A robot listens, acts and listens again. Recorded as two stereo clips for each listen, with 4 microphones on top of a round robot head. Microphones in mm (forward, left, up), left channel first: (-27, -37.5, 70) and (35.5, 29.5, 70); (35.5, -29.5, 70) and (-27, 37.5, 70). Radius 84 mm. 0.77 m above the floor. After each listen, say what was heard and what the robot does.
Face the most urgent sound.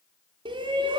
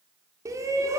The shout: 80° left. Turn 80° left.
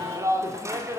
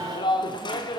The shout is now 10° right. Turn 10° right.
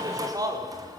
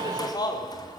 Facing the shout, 2 to 4 m away.